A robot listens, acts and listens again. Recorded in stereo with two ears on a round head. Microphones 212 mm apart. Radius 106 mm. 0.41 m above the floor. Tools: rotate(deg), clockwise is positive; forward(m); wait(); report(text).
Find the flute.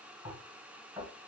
wait()
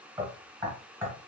wait()
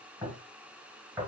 report("I can't make out a flute to turn to.")